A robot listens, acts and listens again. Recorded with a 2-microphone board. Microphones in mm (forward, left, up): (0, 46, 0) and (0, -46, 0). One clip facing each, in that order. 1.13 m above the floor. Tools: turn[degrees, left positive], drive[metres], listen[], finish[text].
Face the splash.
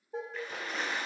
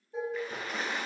Action: turn[30]
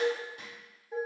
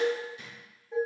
Action: listen[]
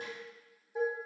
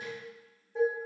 Action: finish[I heard a splash, but can't make it out now. It was about 30° right or 150° left.]